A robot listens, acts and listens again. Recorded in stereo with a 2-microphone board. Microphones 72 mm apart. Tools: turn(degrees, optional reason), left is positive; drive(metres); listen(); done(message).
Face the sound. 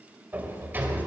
turn(degrees=-25, reason="The sliding door: about 25° right or 155° right.")
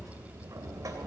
turn(degrees=-125, reason="So it is at 125° right.")
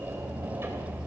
turn(degrees=-35, reason="The sliding door is now 35° right.")
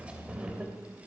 turn(degrees=-15, reason="The sliding door is now 15° right.")
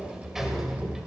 done("Found it: a sliding door, straight ahead, 2 to 4 m away.")